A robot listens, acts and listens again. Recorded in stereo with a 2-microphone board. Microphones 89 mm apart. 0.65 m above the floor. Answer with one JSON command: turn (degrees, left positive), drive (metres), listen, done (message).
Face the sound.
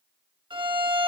{"turn": -60}
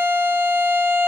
{"turn": -25}
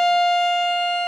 {"done": "Found it: a violin, straight ahead, under 1 m away."}